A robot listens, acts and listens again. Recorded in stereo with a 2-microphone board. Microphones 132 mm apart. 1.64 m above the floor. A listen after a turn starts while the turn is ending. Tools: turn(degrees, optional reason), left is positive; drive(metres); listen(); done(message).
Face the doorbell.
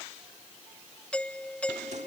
turn(degrees=30)
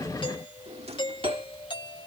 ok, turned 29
turn(degrees=140, reason="So it is at 140° left.")
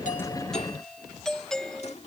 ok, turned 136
done("Found it: a doorbell, straight ahead.")